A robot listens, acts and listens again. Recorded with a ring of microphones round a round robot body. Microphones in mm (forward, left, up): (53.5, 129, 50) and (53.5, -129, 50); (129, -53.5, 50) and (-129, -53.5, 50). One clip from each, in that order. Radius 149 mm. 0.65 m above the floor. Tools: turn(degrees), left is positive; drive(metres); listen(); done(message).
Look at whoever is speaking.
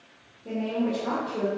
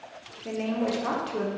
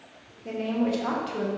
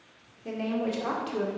turn(degrees=-105)
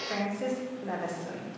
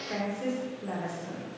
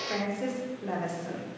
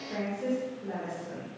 turn(degrees=15)
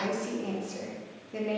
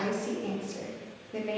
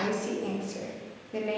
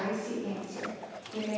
done("Facing the woman speaking, 2 to 4 m away.")